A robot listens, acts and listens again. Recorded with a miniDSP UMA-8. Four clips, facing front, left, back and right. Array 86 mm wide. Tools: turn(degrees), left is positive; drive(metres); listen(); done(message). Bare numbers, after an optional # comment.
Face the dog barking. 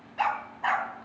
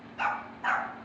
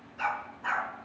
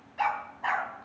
# The dog barking: 20° right.
turn(-20)
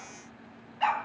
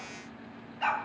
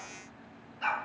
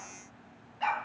done("Facing the dog barking, 2 to 4 m away.")